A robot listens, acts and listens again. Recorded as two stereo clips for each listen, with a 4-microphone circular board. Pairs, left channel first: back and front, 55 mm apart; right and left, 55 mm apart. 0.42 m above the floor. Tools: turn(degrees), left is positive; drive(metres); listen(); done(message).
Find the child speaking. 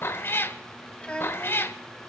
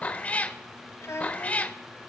turn(degrees=-115)
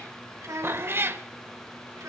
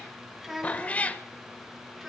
done("Found it: a child speaking, straight ahead.")